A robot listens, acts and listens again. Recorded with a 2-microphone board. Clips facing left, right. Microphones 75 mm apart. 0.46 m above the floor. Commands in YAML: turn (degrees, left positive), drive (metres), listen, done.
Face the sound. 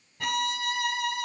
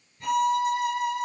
turn: 90
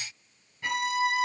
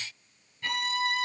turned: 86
turn: 15
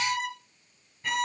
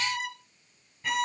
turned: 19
done: "Found it: a violin, straight ahead, 2 to 4 m away."